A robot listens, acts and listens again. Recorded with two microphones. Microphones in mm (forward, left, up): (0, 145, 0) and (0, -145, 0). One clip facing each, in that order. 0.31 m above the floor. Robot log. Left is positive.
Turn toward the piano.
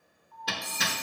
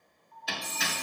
note: The piano: about 45° left or 135° left.
cmd yaw +45
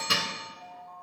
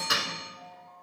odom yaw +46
note: So it is at 85° left.
cmd yaw +85
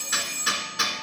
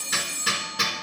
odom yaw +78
cmd idle
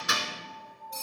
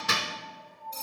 end: Facing the piano, 1 to 2 m away.